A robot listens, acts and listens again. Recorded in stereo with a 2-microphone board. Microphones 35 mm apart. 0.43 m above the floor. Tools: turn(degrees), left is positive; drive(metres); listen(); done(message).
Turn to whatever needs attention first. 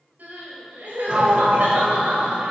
turn(degrees=-55)
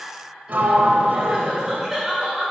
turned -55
turn(degrees=-15)
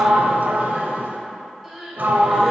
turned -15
done("Found it: crying, straight ahead.")